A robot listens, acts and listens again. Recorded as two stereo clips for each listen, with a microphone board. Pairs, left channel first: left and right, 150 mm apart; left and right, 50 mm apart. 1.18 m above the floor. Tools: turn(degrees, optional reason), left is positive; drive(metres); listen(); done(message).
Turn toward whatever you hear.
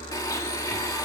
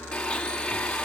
turn(degrees=25, reason="The blender: about 25° left or 155° left.")
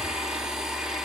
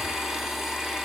done("Found it: a blender, straight ahead, 2 to 4 m away.")